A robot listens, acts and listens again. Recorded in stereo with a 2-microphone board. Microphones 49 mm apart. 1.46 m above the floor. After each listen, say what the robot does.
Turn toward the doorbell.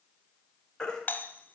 Turn 35° left.
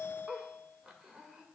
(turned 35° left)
Turn 105° left.
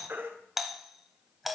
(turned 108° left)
Facing the doorbell.